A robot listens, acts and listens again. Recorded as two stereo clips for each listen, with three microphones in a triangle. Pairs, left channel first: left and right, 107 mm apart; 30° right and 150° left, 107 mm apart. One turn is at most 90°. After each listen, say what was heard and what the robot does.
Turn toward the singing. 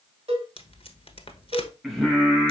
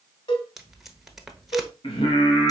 Facing the singing.